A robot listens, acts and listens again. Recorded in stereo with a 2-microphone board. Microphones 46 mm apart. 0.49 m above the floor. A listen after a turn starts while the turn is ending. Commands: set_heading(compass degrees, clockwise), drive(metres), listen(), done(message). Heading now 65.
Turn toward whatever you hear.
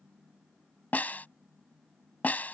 set_heading(25)
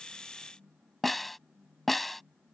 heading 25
done("Facing the snare drum.")